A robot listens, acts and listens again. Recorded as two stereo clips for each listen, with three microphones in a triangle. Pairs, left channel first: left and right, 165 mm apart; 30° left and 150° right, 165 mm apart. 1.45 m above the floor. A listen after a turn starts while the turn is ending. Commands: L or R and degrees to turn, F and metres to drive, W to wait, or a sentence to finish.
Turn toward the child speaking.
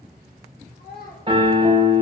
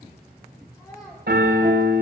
L100
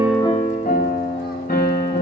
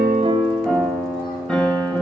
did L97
W
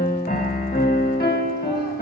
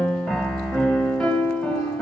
W
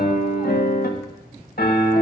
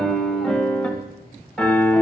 Facing where the child speaking came from. I can't hear it now.